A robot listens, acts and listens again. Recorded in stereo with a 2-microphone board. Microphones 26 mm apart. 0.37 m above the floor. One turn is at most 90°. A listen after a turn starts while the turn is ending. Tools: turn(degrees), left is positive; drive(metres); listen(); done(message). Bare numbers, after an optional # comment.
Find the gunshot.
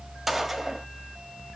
turn(-30)
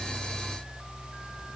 listen()
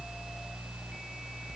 done("I heard a gunshot, but can't make it out now. It was about 20° left or 140° right.")